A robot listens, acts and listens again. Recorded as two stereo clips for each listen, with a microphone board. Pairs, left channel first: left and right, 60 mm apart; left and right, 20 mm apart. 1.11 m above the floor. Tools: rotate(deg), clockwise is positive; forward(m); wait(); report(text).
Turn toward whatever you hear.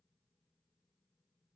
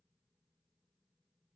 wait()
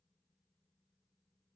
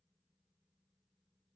wait()
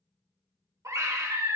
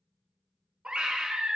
rotate(70)
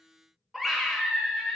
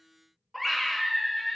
report("Facing the scream, under 1 m away.")